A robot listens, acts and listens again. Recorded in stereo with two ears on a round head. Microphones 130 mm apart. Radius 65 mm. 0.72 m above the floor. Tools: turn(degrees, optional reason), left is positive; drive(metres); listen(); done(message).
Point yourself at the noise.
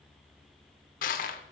turn(degrees=65, reason="The crushing: about 65° left or 115° left.")
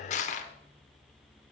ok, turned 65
turn(degrees=50, reason="So it is at 50° left.")
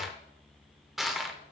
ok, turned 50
done("Facing the crushing, under 1 m away.")